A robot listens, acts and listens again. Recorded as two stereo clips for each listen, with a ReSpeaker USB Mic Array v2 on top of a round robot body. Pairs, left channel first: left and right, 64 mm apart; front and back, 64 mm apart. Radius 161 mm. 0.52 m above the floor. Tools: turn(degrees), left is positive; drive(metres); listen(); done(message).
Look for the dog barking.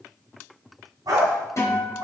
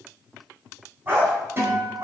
turn(degrees=-125)
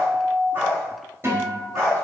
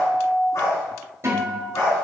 turn(degrees=-40)
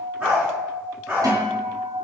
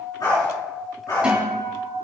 turn(degrees=-20)
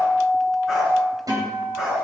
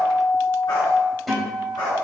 done("Facing the dog barking, over 4 m away.")